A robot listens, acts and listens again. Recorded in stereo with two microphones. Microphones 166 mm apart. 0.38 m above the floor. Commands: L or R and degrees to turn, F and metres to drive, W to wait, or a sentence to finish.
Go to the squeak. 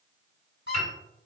L90
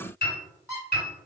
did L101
R15
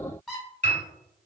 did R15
F1.0
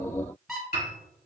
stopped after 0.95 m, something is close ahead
I am next to the squeak.